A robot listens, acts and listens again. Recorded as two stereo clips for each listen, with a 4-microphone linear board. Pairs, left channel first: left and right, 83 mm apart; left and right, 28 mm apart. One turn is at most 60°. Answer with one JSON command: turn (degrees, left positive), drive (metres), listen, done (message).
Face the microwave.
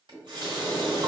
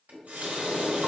{"turn": 60}
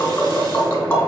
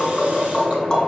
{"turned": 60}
{"listen": true}
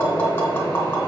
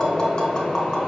{"turn": 15}
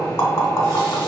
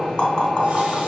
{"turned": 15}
{"done": "Found it: a microwave, straight ahead."}